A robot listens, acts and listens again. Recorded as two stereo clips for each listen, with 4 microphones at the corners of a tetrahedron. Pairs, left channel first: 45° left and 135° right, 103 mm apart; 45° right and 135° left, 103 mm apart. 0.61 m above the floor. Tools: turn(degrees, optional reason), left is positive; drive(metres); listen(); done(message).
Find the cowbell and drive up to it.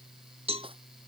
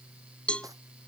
turn(degrees=-125, reason="The cowbell: 125° right.")
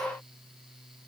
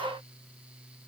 listen()
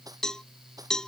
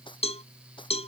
turn(degrees=-40, reason="The cowbell is now 40° right.")
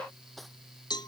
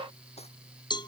drive(metres=1.0)
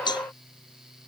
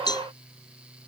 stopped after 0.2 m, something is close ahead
done("Blocked. The cowbell is further on, straight ahead.")